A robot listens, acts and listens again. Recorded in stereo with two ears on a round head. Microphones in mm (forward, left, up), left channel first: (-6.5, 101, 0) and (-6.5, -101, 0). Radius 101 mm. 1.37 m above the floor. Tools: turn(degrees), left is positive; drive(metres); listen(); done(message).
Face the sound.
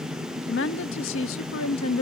turn(degrees=70)
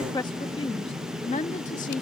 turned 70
turn(degrees=30)
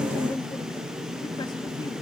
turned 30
turn(degrees=15)
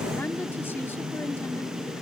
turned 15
listen()
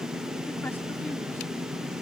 listen()
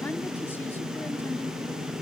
done("Facing where the woman speaking came from. I can't hear it now.")